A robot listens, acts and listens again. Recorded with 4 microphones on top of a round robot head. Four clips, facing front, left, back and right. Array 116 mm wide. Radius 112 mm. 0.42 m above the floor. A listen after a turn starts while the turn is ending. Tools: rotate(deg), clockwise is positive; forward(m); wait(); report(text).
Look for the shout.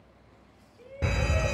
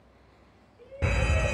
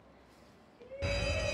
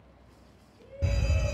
rotate(-10)
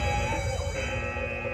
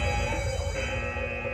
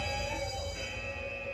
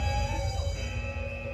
wait()
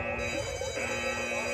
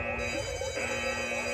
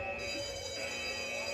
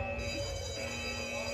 wait()
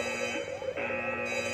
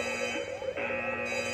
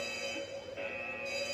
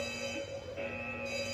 report("I heard a shout from this way, but can't make it out now.")